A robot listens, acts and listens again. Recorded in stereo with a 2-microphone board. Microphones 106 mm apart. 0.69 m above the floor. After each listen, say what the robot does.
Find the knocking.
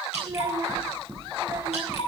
Turn 70° left.
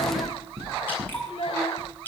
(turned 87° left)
Turn 20° right.
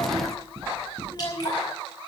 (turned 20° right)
Facing the knocking, over 4 m away.